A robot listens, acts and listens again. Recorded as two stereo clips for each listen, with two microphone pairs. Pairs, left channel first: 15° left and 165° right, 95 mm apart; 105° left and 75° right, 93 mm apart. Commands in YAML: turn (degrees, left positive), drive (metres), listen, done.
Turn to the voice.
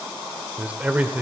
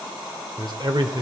turn: -95
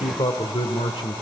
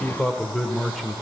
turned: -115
turn: 20
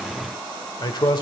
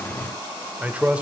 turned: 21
done: "Found it: a man speaking, straight ahead, 1 to 2 m away."